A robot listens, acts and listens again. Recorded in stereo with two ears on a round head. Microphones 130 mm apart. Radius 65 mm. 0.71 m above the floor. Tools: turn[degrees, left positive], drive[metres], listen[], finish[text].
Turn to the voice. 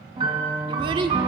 Thought: The child speaking: about 35° right or 145° right.
Action: turn[-35]
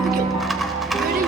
Action: listen[]
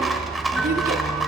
Action: listen[]
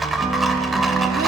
Action: finish[I heard a child speaking, but can't make it out now. It was about straight ahead or 110° right.]